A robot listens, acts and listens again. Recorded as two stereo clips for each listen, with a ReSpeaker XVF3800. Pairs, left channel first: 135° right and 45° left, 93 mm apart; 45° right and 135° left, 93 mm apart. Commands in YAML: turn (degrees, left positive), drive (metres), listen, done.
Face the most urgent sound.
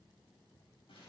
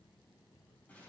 listen: true
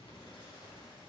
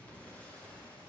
listen: true
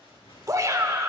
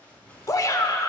done: "Found it: a shout, straight ahead, 1 to 2 m away."